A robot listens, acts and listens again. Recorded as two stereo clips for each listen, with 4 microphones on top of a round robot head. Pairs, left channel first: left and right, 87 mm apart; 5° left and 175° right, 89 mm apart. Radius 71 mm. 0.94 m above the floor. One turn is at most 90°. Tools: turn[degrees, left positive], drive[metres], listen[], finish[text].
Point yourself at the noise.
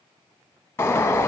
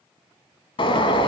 Thought: The bird: 25° left.
Action: turn[25]
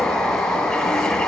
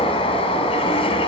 Action: finish[Found it: a bird, straight ahead.]